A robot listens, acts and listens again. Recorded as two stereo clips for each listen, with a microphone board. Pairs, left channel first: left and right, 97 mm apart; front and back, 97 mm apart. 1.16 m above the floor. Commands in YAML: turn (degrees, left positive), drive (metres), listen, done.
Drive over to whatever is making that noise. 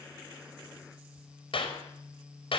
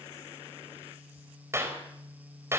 turn: 115
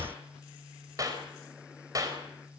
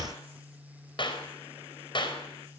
turn: -35
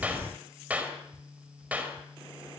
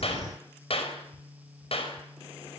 turn: -15
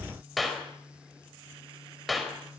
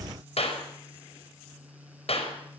drive: 1.0
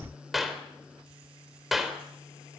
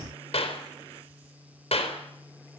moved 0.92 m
drive: 1.0
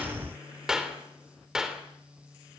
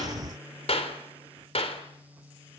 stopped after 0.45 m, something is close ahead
done: "Something is in my way. I am facing the clap but have not reached it."